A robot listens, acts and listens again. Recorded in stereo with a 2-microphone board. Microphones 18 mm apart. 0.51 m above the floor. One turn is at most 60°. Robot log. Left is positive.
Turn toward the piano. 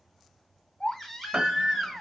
cmd yaw -60
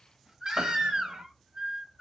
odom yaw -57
note: So it is at 40° right.
cmd yaw -40
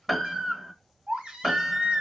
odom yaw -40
end: Found it: a piano, straight ahead, under 1 m away.